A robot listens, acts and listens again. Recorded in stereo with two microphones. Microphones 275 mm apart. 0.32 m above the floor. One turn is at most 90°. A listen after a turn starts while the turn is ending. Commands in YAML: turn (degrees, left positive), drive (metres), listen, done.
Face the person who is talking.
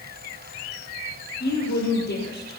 turn: 40
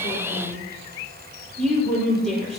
done: "Facing the woman speaking."